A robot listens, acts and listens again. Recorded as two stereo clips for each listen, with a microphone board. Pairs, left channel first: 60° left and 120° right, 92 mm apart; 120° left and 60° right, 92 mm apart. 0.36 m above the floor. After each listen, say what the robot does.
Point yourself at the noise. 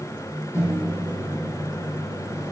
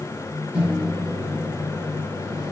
Turn 10° left.
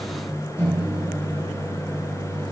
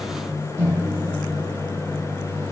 Facing the microwave, 2 to 4 m away.